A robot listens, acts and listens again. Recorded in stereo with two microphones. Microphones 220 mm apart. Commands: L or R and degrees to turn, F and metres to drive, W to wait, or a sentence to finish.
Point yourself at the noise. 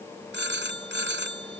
R55
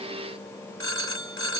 R70
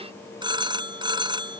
R20
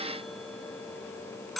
Facing the phone ringing.